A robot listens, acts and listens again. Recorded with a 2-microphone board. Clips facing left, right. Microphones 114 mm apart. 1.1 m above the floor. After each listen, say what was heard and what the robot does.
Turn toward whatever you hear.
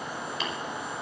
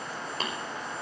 The tapping: about 45° right or 135° right. Turn 45° right.
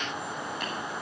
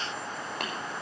So it is at 85° right. Turn 85° right.
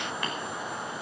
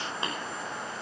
Keep listening.
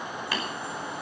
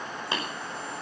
The tapping is now 25° right. Turn 25° right.
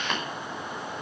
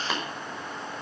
Facing the tapping, over 4 m away.